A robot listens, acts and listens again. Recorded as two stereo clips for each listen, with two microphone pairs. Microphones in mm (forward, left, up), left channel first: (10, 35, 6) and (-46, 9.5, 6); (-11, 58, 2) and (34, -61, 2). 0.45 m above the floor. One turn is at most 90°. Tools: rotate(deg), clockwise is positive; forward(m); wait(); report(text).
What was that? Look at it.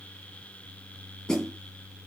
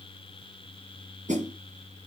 rotate(55)
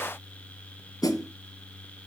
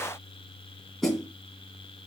rotate(-25)
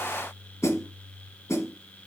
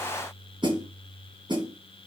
rotate(15)
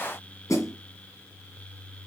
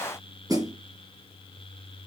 rotate(10)
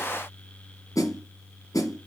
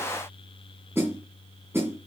report("Facing the snare drum.")